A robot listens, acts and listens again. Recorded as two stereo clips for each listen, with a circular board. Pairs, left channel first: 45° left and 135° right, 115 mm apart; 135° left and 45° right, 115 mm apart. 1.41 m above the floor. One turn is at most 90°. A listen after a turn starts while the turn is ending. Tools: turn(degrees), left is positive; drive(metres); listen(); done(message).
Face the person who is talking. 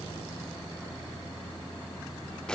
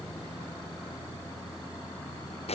listen()
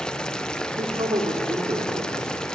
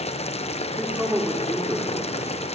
turn(degrees=-90)
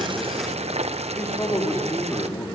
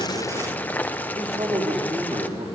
turn(degrees=-25)
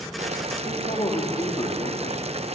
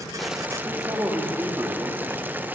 turn(degrees=10)
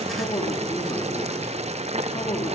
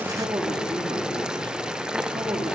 done("Facing the man speaking, 2 to 4 m away.")